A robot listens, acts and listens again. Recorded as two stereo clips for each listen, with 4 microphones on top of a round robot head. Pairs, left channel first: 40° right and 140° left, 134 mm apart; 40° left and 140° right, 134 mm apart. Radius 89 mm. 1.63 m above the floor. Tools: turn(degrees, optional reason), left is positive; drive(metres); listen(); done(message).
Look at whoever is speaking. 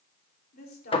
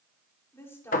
turn(degrees=-35, reason="The woman speaking: 35° right.")
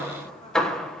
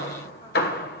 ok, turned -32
listen()
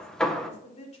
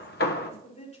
done("Found it: a woman speaking, straight ahead.")